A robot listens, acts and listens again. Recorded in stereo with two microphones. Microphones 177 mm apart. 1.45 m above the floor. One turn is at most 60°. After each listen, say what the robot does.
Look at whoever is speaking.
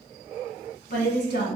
Turn 60° left.
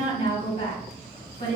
Turn 50° left.
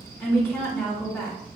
Turn 10° left.
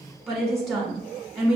Found it: a woman speaking, straight ahead.